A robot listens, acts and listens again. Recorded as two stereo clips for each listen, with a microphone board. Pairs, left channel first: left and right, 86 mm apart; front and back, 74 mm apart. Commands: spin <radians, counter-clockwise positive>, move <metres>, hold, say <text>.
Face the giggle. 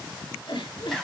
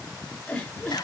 spin 1.31
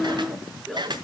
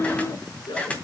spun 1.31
say Found it: a giggle, straight ahead.